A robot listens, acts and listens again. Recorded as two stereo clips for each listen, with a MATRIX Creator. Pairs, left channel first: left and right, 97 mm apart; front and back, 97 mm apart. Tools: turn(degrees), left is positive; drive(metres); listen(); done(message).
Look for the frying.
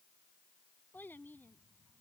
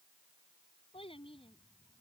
listen()
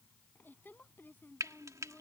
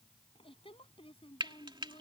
turn(degrees=-145)
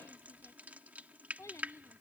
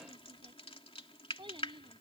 turn(degrees=-15)
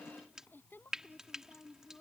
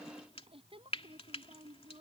done("Facing the frying.")